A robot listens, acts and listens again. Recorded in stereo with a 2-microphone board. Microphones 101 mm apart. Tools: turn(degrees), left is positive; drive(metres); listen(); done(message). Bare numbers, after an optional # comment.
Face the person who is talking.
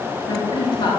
# The woman speaking: about 55° left or 125° left.
turn(55)
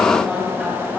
done("Found it: a woman speaking, straight ahead.")